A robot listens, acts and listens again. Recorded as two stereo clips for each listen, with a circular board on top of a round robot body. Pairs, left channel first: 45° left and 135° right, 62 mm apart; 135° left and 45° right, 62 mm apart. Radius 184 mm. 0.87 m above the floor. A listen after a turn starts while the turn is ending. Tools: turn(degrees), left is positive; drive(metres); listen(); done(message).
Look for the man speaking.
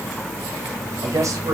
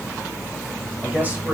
turn(degrees=-110)
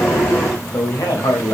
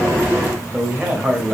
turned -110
turn(degrees=30)
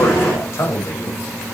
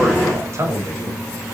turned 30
done("Found it: a man speaking, straight ahead.")